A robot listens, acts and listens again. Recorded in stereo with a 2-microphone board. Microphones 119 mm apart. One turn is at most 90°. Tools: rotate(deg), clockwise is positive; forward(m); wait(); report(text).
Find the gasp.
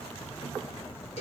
wait()
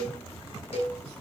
wait()
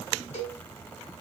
report("I can't make out a gasp to turn to.")